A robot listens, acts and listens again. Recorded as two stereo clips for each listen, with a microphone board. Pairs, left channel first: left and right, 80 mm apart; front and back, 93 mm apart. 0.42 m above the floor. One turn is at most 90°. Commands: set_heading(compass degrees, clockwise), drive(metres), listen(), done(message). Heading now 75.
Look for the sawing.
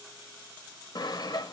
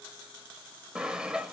set_heading(345)
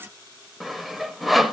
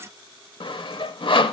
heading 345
done("Facing the sawing, 1 to 2 m away.")